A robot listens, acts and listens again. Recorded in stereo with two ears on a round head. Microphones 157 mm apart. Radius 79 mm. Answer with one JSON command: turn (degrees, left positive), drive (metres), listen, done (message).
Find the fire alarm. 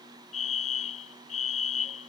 {"turn": 40}
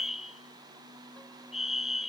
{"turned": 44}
{"done": "Facing the fire alarm."}